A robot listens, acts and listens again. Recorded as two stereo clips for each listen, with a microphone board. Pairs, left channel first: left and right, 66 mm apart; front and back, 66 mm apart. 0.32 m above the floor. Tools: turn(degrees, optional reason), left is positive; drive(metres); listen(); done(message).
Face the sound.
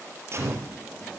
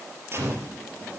turn(degrees=-135, reason="The gunshot: 135° right.")
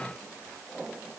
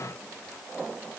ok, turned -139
done("I heard a gunshot from this way, but can't make it out now.")